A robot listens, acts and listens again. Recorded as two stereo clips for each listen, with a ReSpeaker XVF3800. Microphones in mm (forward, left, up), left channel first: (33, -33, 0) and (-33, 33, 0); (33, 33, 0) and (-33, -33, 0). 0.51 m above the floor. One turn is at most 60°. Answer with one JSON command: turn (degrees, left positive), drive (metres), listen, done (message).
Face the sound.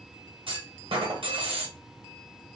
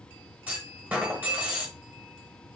{"turn": 60}
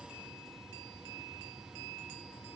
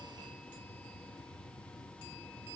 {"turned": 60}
{"turn": 60}
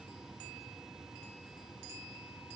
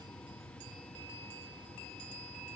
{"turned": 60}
{"turn": 35}
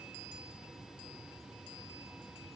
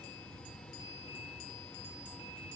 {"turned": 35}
{"done": "Facing where the clunk came from. I can't hear it now."}